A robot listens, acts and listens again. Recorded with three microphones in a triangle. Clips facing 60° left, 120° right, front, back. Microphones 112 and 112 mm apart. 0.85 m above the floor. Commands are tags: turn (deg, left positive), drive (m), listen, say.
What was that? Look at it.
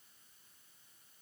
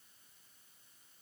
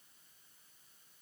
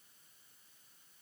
<listen/>
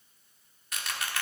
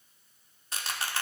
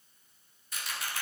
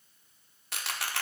<turn deg="-175"/>
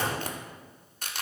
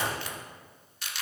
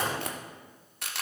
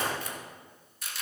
<turn deg="15"/>
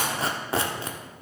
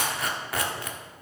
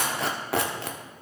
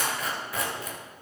<say>Facing the tearing paper, 1 to 2 m away.</say>